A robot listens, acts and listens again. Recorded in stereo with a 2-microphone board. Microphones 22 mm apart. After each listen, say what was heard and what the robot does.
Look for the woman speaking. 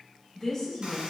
Turn 30° left.
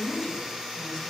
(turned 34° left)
So it is at 155° left. Turn 155° left.
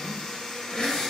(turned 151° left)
Keep listening.
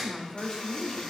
The woman speaking is now 40° left. Turn 40° left.
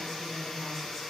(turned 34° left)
Keep listening.
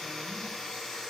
Keep listening.
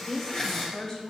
The woman speaking is now 20° left. Turn 20° left.
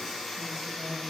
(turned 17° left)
Keep listening.
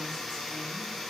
Keep listening.
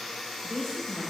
Found it: a woman speaking, straight ahead.